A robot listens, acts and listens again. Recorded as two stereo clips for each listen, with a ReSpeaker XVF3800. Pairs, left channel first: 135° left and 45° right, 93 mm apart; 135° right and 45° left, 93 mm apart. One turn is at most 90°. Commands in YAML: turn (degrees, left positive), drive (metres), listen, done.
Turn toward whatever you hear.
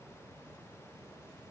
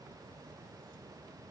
listen: true
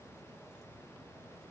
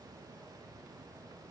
listen: true
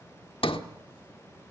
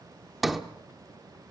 turn: 90
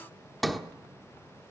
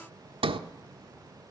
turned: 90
turn: 45
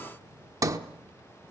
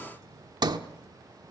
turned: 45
done: "Found it: a sliding door, straight ahead."